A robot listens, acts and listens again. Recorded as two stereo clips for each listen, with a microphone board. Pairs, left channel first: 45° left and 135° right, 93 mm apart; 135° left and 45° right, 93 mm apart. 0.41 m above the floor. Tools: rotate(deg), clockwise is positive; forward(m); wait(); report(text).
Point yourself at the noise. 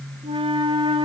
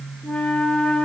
rotate(145)
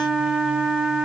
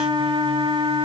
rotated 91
rotate(55)
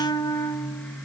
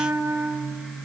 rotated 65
rotate(-10)
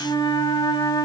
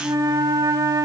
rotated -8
report("Facing the flute.")